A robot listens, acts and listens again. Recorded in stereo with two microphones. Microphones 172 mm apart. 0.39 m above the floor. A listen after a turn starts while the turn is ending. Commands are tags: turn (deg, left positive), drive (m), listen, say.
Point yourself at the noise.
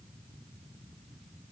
<listen/>
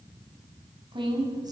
<turn deg="-20"/>
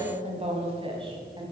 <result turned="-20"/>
<turn deg="-25"/>
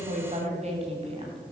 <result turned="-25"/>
<turn deg="-30"/>
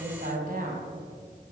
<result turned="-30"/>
<turn deg="-130"/>
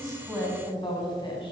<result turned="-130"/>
<turn deg="25"/>
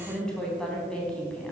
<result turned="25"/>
<say>Facing the woman speaking, 2 to 4 m away.</say>